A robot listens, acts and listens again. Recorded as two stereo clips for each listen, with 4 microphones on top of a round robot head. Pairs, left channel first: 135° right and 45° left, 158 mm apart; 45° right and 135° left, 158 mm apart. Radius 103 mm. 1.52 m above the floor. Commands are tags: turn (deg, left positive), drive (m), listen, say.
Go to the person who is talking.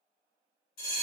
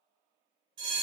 <listen/>
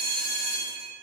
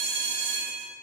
<listen/>
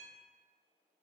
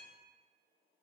<say>I can't make out anyone speaking to turn to.</say>